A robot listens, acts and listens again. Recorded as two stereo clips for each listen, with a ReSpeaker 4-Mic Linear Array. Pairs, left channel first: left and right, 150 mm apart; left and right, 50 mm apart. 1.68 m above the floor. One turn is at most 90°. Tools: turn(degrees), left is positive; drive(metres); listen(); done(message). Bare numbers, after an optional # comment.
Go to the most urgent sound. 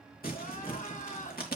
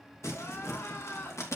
# The crying: about 60° left or 120° left.
turn(60)
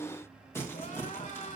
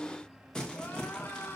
# So it is at 55° left.
turn(55)
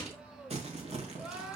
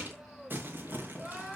drive(1.0)
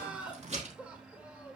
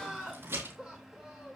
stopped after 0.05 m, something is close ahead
# The crying is now 10° right.
turn(-10)
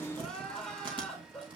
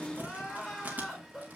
done("Blocked. The crying is further on, straight ahead.")